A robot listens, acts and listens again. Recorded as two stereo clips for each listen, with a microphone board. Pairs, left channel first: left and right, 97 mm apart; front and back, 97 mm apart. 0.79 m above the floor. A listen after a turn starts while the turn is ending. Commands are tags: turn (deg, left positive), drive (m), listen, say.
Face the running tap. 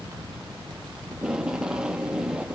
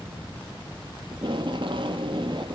<listen/>
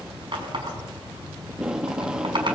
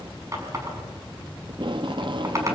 <turn deg="-125"/>
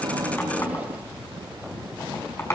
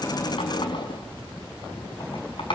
<turn deg="30"/>
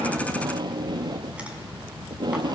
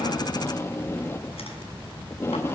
<listen/>
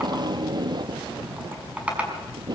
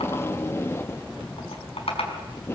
<turn deg="-15"/>
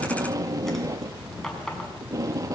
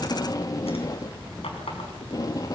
<listen/>
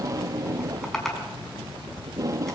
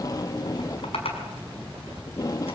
<say>Found it: a running tap, straight ahead, over 4 m away.</say>